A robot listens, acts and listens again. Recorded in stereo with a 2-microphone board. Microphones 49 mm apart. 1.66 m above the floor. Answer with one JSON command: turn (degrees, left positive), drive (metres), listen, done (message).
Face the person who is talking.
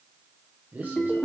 {"turn": -35}
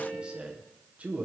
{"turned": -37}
{"turn": -30}
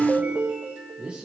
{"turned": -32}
{"turn": -20}
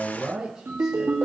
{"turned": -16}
{"turn": -10}
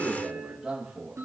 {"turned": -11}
{"turn": -10}
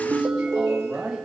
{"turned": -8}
{"done": "Facing the man speaking."}